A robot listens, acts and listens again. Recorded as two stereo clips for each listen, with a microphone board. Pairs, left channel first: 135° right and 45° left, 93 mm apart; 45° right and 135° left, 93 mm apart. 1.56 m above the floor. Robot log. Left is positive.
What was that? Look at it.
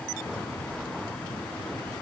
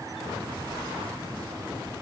cmd idle
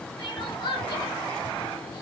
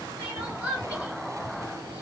note: The crying: 155° right.
cmd yaw -155
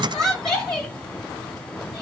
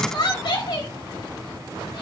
note: The crying is now 50° right.
cmd yaw -50
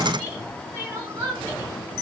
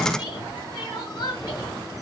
note: The crying is now 15° right.
cmd yaw -15
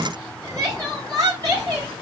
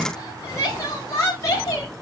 end: Found it: crying, straight ahead.